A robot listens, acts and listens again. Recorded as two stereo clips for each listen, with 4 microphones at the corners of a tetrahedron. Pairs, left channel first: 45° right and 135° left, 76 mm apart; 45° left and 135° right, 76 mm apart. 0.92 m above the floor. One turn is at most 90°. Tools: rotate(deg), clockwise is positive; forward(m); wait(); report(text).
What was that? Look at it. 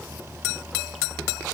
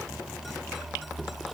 wait()
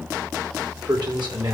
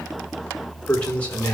rotate(-90)
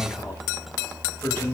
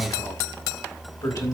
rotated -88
rotate(-15)
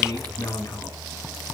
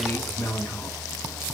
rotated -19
report("Facing the man speaking, over 4 m away.")